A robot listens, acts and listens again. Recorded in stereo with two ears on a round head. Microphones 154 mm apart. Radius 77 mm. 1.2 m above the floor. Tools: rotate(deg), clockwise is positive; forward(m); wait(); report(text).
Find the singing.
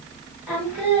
rotate(30)
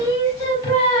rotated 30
rotate(-25)
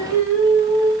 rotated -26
report("Found it: singing, straight ahead, 2 to 4 m away.")